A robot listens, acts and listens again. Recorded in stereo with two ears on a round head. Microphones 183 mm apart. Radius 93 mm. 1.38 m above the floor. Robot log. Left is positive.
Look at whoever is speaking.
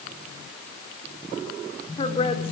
note: The woman speaking: about 30° left or 150° left.
cmd yaw +30
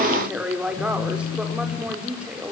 end: Facing the woman speaking, over 4 m away.